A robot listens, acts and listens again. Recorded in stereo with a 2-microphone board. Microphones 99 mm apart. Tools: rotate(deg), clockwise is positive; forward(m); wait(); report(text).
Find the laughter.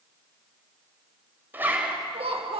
rotate(70)
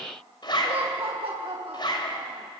rotate(75)
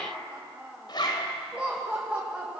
rotate(10)
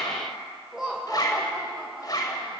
report("Facing the laughter, 2 to 4 m away.")